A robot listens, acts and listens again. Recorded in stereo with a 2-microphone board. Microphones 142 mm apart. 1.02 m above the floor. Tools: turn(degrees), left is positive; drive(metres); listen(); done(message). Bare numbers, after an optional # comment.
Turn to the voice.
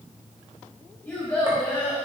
turn(30)
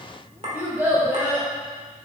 # So it is at 15° right.
turn(-15)
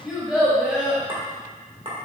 done("Found it: a child speaking, straight ahead, 2 to 4 m away.")